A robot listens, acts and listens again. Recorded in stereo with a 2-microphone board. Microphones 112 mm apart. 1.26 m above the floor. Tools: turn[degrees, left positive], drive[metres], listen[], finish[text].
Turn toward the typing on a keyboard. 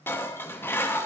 Action: listen[]
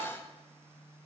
Action: listen[]
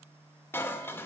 Action: finish[I can't make out typing on a keyboard to turn to.]